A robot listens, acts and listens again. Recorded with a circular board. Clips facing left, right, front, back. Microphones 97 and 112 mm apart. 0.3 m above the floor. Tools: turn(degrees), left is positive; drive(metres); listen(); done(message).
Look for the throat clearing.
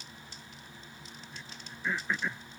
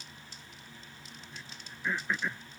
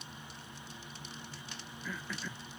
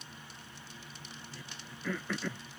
turn(degrees=180)
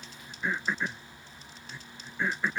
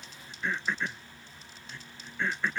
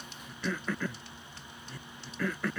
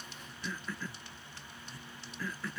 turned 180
turn(degrees=10)
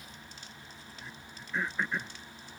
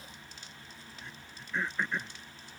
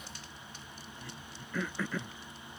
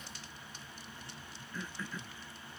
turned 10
done("Found it: throat clearing, straight ahead.")